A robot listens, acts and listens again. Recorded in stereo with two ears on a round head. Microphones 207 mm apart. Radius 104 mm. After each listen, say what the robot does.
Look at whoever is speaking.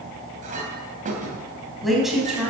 Turn 30° right.
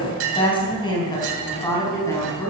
Turn 15° left.
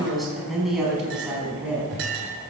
Found it: a woman speaking, straight ahead, over 4 m away.